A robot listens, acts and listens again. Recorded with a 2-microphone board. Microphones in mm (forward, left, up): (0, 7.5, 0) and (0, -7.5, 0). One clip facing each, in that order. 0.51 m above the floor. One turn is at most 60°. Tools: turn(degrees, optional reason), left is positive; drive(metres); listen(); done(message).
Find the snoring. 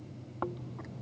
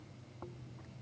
turn(degrees=50, reason="The snoring: about 50° left or 130° left.")
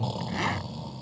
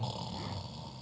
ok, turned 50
done("Facing the snoring.")